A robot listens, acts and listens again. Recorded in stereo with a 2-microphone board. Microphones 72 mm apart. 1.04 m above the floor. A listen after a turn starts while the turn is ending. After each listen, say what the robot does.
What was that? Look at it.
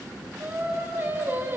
Turn 30° right.
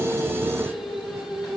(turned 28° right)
Found it: singing, straight ahead.